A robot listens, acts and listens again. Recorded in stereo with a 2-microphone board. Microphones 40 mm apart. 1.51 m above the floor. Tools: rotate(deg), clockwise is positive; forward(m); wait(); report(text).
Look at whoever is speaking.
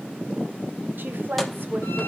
rotate(55)
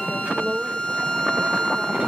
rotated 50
report("Facing the woman speaking.")